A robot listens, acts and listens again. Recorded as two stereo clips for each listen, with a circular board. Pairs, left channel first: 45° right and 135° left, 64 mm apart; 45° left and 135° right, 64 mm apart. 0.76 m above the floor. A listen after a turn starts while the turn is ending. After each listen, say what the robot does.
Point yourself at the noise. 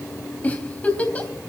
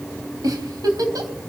Turn 115° right.
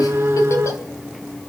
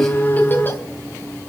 Keep listening.
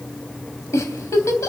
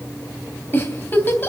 Turn 10° right.
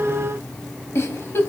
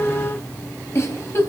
Found it: a giggle, straight ahead.